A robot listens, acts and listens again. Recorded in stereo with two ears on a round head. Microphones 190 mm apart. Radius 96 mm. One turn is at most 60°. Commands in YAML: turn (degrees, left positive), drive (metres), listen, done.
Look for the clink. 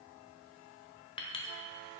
turn: 25
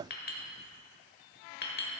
turn: 60
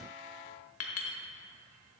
turn: 60
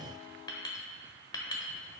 turn: 20
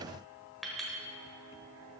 done: "Facing the clink."